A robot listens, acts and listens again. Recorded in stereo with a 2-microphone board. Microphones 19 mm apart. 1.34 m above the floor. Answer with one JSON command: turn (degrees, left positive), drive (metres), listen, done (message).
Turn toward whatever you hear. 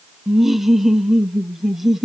{"turn": -30}
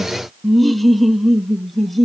{"turn": 10}
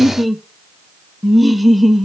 {"done": "Facing the laughter, under 1 m away."}